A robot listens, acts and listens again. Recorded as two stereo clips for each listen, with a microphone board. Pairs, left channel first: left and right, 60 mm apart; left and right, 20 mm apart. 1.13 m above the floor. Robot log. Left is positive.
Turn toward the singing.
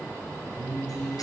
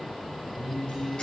note: The singing: about 35° left or 145° left.
cmd yaw +35
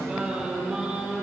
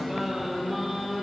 end: Facing the singing.